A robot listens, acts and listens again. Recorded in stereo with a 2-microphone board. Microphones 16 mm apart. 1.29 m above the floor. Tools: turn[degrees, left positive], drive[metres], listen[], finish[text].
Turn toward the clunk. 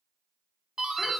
Action: listen[]
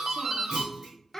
Thought: The clunk: about 15° right or 165° right.
Action: turn[-15]
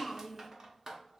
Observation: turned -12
Action: listen[]
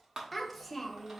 Action: finish[I heard a clunk, but can't make it out now. It was about 5° right or 155° right.]